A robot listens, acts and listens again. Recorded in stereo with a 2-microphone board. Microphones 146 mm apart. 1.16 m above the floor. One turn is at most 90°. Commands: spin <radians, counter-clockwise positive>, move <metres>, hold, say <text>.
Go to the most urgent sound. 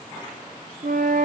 hold
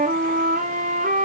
hold
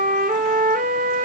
say I can't make out anything urgent, only a flute.